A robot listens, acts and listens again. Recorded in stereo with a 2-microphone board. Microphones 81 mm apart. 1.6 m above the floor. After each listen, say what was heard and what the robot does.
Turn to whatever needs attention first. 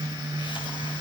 Keep listening.
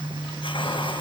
Keep listening.
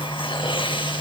I can't make out anything urgent to turn to.